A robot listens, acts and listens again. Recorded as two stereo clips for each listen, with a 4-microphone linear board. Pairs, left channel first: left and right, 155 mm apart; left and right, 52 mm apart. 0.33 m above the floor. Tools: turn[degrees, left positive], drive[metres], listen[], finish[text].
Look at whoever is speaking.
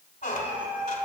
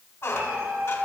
Action: listen[]
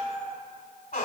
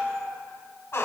Action: listen[]
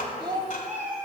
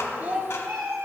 Thought: The child speaking: about 30° right or 150° right.
Action: turn[-30]
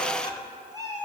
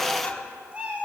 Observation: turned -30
Action: listen[]
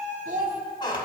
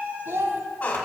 Thought: So it is at 115° right.
Action: turn[-115]
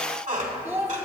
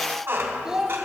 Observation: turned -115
Thought: The child speaking is now 15° right.
Action: turn[-15]
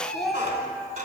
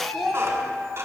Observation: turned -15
Action: finish[Found it: a child speaking, straight ahead, 1 to 2 m away.]